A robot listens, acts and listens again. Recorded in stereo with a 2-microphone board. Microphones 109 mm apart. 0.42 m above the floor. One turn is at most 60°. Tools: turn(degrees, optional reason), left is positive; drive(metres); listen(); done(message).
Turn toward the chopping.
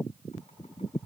listen()
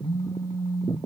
listen()
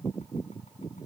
done("I can't make out chopping, only a phone buzzing.")